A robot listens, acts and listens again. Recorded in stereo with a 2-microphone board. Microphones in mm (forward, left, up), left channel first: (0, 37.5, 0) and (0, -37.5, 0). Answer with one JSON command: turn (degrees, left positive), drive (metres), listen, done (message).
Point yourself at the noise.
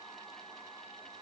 {"listen": true}
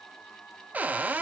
{"turn": -20}
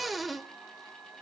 {"done": "Facing the cupboard door."}